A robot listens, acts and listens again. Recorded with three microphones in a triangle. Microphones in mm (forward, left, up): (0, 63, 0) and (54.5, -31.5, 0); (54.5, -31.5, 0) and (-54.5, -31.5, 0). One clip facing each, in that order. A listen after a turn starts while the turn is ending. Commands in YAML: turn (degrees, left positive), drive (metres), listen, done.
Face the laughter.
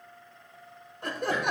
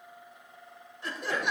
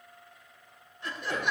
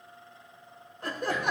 turn: 145
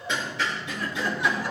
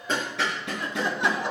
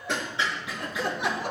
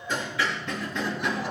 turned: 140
done: "Facing the laughter."